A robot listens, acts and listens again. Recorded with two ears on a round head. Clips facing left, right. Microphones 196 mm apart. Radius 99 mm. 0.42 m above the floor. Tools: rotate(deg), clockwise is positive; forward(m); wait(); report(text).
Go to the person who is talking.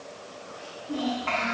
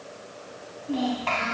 rotate(70)
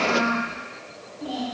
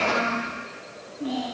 rotate(35)
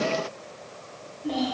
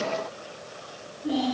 forward(1.0)
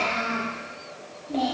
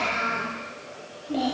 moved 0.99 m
rotate(15)
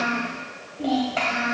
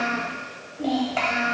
forward(1.0)
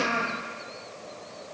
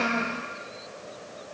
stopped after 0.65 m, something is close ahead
report("Arrived at the child speaking, straight ahead.")